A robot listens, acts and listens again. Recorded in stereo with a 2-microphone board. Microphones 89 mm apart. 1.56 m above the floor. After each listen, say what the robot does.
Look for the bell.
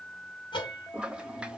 Turn 65° left.
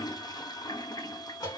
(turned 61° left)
Turn 50° left.
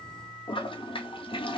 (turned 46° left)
Keep listening.
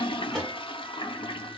Keep listening.
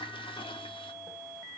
Facing where the bell came from. I can't hear it now.